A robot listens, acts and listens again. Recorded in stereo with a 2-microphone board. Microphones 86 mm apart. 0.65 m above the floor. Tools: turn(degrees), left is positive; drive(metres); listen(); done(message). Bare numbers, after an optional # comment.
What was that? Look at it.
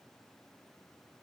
listen()
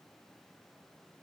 listen()
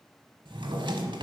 # The drawer: about 70° right or 110° right.
turn(-70)
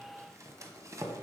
# So it is at 40° right.
turn(-40)
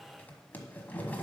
# The drawer is now 20° left.
turn(20)
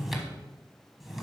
done("Found it: a drawer, straight ahead, 1 to 2 m away.")